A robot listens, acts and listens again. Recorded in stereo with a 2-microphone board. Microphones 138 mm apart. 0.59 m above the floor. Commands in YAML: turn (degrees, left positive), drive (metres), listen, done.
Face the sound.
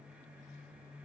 listen: true
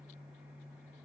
listen: true
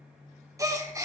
turn: -25
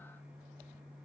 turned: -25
listen: true
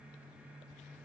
done: "I heard a gasp, but can't make it out now. It was about straight ahead or 130° right."